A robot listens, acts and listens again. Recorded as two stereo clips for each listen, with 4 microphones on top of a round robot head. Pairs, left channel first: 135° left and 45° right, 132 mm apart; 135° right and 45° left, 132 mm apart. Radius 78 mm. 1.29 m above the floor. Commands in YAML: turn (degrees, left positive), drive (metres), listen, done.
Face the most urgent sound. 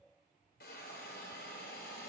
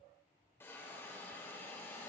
listen: true
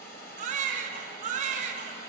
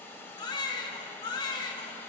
turn: -75
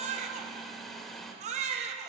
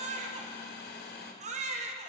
done: "Found it: a baby crying, straight ahead, 1 to 2 m away."